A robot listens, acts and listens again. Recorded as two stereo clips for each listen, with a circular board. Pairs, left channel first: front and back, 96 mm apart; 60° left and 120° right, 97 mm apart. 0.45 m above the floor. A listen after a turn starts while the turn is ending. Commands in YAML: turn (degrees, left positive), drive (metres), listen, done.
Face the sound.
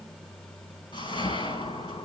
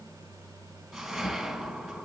turn: -30
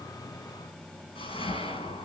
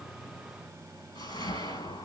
turn: 20
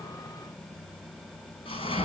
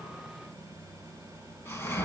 done: "Found it: a whoosh, straight ahead."